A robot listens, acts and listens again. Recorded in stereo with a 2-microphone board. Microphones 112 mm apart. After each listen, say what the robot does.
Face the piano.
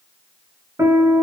Turn 40° right.
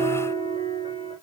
Turn 100° right.
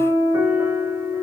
Turn 20° right.
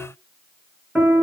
Found it: a piano, straight ahead, 1 to 2 m away.